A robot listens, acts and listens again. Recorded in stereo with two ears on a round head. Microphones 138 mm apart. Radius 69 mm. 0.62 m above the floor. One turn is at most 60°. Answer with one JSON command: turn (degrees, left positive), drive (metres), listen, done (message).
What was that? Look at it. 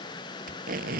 {"turn": -60}
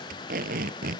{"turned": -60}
{"turn": -55}
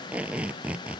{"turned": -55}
{"turn": -10}
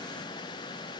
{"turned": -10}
{"listen": true}
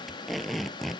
{"done": "Facing the tape being pulled."}